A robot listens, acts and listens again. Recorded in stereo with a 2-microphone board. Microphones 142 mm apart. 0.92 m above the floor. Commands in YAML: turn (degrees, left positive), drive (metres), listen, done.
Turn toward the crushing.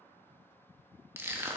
turn: -15
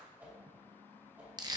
turn: -150
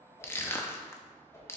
turn: 15
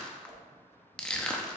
done: "Facing the crushing."